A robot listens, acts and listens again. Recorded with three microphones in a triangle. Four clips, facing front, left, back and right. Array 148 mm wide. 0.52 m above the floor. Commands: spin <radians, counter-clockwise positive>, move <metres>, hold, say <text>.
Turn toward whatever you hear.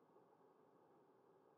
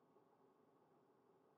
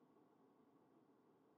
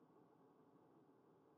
hold
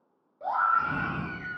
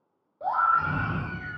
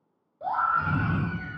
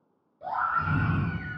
spin 1.48
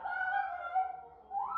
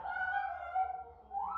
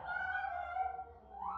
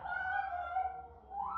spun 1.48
spin -0.17
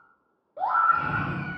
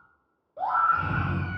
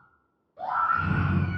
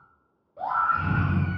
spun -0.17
say Facing the scream, 1 to 2 m away.